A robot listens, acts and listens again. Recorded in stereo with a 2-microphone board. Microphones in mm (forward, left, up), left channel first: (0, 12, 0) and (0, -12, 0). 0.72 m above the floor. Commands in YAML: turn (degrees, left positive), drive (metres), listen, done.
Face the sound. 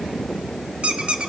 turn: -55
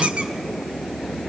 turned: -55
listen: true
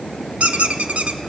turn: -70
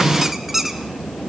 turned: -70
turn: -10
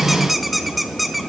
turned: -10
done: "Found it: a squeak, straight ahead, under 1 m away."